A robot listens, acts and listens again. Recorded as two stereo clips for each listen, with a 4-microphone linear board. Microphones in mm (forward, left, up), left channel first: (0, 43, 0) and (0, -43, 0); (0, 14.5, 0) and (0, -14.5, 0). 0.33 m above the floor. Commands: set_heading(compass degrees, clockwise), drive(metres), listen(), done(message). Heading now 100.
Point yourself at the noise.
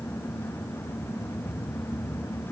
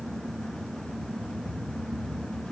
listen()
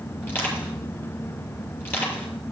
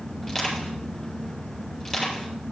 set_heading(75)
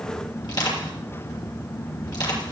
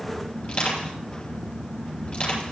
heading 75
set_heading(305)
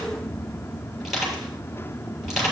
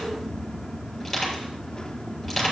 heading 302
done("Found it: crushing, straight ahead.")